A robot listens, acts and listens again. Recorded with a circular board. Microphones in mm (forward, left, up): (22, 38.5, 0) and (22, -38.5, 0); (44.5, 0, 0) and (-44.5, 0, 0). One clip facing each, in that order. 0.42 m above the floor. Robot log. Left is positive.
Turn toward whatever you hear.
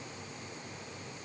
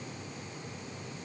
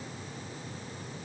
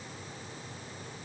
cmd idle
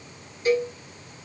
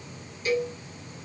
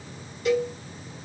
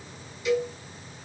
note: The cowbell: 35° left.
cmd yaw +35
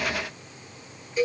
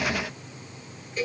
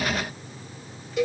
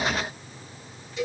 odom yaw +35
note: The cowbell is now 10° left.
cmd yaw +10
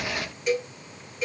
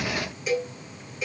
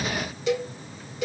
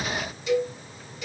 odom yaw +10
end: Found it: a cowbell, straight ahead.